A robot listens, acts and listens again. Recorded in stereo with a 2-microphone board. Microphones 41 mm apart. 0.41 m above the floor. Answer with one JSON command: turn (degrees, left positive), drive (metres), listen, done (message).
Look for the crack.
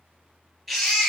{"listen": true}
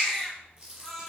{"turn": -25}
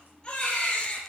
{"listen": true}
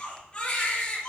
{"done": "I heard a crack, but can't make it out now. It was about straight ahead or 130° right."}